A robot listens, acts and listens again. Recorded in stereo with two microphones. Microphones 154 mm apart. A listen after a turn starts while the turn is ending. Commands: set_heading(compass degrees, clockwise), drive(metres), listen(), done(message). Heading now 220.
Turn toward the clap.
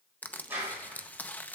set_heading(250)
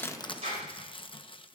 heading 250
set_heading(30)
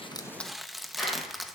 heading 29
done("Facing the clap.")